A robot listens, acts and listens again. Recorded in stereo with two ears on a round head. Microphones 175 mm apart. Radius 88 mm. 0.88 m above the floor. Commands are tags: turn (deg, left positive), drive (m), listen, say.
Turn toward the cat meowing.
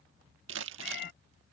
<turn deg="55"/>
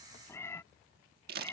<turn deg="15"/>
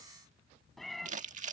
<say>Found it: a cat meowing, straight ahead.</say>